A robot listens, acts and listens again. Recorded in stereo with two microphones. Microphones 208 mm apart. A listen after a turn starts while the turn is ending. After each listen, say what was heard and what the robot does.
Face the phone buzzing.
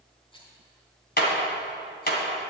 Keep listening.
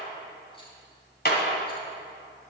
Keep listening.
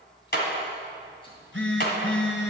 The phone buzzing: about 70° left or 110° left. Turn 70° left.
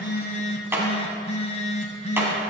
So it is at 35° left. Turn 35° left.
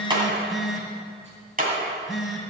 Facing the phone buzzing.